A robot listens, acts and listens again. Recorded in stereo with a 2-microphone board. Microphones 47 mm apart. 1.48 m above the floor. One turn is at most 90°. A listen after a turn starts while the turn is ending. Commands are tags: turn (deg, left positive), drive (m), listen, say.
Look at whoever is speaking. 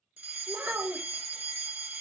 <turn deg="-45"/>
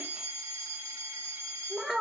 <say>Found it: a child speaking, straight ahead, 1 to 2 m away.</say>